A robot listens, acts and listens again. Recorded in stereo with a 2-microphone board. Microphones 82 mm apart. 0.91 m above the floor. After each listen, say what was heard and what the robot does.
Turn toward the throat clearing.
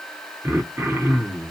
The throat clearing: about 30° right or 150° right. Turn 30° right.
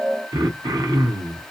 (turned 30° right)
So it is at 115° right. Turn 115° right.
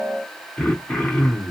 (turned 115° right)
The throat clearing is now 15° left. Turn 15° left.
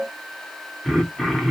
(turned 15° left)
Found it: throat clearing, straight ahead, under 1 m away.